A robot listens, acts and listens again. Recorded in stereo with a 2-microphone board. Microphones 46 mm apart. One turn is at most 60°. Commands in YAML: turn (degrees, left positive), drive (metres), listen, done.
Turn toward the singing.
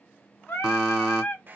turn: 45
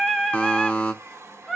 done: "Facing the singing."